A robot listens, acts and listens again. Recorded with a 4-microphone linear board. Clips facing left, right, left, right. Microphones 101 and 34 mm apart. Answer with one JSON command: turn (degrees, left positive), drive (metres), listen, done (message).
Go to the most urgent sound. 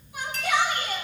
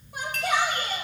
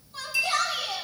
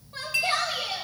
{"turn": -50}
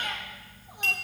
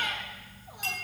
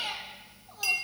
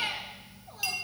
{"turn": -75}
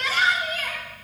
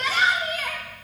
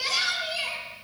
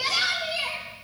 {"drive": 1.0}
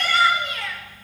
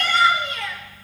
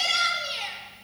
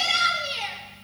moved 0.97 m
{"drive": 1.0}
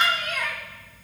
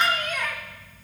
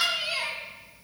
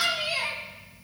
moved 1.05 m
{"drive": 1.0}
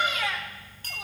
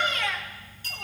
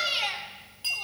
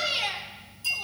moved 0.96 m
{"drive": 1.0}
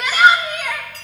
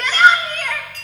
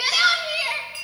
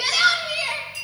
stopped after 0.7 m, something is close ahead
{"turn": 10}
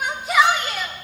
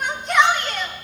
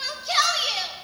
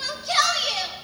{"done": "Arrived at the shout, straight ahead."}